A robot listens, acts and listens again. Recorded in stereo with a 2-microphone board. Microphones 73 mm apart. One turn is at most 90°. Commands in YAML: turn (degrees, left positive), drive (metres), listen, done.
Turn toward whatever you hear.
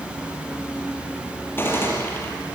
turn: 30
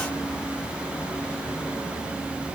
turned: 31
listen: true
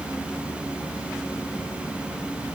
done: "I heard a gunshot, but can't make it out now. It was about straight ahead or 120° left."